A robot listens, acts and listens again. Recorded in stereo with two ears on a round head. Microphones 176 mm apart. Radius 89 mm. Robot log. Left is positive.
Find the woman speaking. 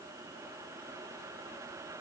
cmd idle
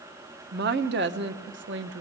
note: The woman speaking: about 65° right or 115° right.
cmd yaw -65
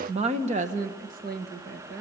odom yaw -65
note: So it is at 55° right.
cmd yaw -55
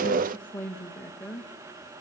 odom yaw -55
end: Facing the woman speaking, 1 to 2 m away.